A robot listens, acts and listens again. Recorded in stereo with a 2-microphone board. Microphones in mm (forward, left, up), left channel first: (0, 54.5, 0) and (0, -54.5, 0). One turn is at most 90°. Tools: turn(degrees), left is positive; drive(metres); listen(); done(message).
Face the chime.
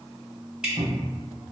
listen()
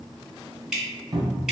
listen()
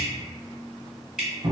done("I can't make out a chime, only dripping and a cupboard door.")